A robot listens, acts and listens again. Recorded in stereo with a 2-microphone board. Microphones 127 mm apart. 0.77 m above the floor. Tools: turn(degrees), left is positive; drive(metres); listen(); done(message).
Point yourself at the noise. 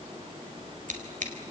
turn(degrees=-90)
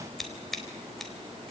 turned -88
done("Facing the scissors.")